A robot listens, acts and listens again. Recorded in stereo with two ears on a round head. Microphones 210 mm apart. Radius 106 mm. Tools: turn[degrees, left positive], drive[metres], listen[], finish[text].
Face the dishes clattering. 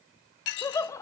Thought: The dishes clattering: about 50° left or 130° left.
Action: turn[50]
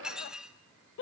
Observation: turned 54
Action: finish[Facing the dishes clattering.]